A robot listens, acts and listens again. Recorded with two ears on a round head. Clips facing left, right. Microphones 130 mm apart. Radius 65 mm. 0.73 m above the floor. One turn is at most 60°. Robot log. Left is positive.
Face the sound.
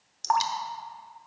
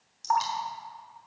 note: The dripping: about 65° left or 115° left.
cmd yaw +60
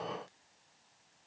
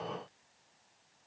cmd idle
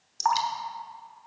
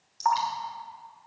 note: So it is at 55° left.
cmd yaw +55
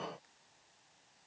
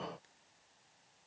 cmd idle
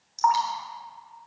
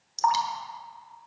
note: The dripping is now 35° right.
cmd yaw -35
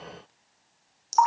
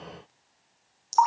end: Found it: dripping, straight ahead, 1 to 2 m away.